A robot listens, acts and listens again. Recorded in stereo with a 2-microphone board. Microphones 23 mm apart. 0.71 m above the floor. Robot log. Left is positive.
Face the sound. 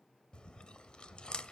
note: The chewing: about 40° left or 140° left.
cmd yaw +40
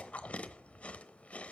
note: So it is at 95° left.
cmd yaw +95
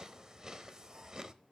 note: The chewing is now 30° right.
cmd yaw -30
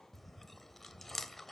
note: The chewing is now 10° left.
cmd yaw +10
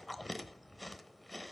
end: Found it: chewing, straight ahead.